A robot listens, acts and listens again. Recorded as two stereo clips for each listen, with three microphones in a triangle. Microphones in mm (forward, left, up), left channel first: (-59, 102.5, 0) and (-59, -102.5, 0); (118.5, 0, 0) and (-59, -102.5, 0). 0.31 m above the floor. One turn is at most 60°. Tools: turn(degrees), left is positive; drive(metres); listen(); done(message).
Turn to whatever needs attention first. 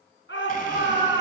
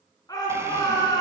turn(degrees=60)
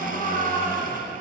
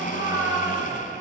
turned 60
turn(degrees=40)
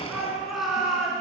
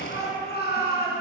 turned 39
done("Found it: a shout, straight ahead, 2 to 4 m away.")